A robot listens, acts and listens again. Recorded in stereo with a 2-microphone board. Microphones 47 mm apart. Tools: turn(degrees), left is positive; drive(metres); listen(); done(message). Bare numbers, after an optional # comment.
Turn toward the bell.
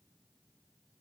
listen()
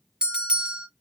# The bell: about 20° right or 160° right.
turn(-20)
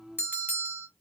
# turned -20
# So it is at 135° right.
turn(-135)
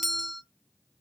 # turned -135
done("Facing the bell.")